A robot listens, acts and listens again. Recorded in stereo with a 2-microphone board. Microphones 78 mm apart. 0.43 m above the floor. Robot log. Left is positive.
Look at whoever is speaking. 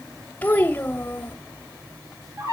note: The child speaking: about 25° left or 155° left.
cmd yaw +25
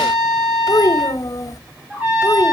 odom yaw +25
note: So it is at 130° left.
cmd yaw +130
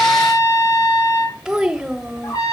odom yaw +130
note: The child speaking is now 10° right.
cmd yaw -10
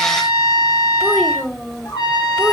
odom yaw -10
end: Found it: a child speaking, straight ahead, 1 to 2 m away.